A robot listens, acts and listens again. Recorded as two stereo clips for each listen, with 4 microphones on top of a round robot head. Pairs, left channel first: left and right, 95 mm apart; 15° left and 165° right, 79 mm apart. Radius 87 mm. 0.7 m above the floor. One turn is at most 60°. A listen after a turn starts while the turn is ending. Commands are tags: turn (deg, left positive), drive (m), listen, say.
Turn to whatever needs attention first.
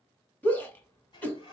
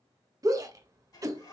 <turn deg="60"/>
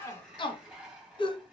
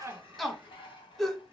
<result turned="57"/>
<turn deg="60"/>
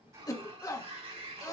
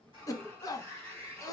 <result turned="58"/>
<turn deg="45"/>
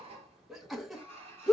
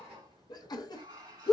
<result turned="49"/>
<say>Found it: a shout, straight ahead, 1 to 2 m away.</say>